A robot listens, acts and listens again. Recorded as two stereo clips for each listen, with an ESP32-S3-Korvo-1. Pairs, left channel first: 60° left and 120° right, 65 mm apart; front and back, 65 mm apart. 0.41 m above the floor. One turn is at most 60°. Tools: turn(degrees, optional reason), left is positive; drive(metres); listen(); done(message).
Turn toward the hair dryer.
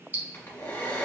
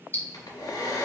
done("Facing the hair dryer.")